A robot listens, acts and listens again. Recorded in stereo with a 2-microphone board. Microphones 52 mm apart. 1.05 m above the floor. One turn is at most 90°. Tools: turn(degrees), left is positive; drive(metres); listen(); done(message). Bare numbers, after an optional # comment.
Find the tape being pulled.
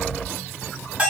listen()
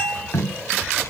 turn(90)
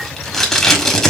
# So it is at 10° left.
turn(10)
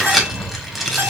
done("Found it: tape being pulled, straight ahead, 1 to 2 m away.")